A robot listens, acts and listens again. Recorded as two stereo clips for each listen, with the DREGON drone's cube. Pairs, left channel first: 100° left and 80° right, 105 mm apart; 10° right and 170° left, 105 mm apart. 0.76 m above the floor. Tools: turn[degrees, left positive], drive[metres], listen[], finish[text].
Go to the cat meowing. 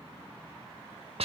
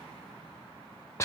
Action: listen[]
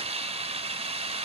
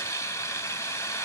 Action: listen[]
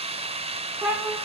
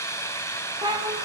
Thought: The cat meowing: 150° right.
Action: turn[-150]
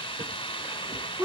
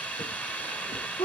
Thought: The cat meowing is now 15° right.
Action: turn[-15]
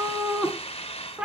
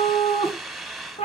Action: drive[1.0]
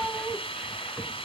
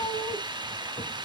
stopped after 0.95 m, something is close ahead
Thought: The cat meowing is now 10° left.
Action: turn[10]
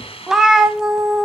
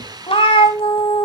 Action: finish[I am next to the cat meowing.]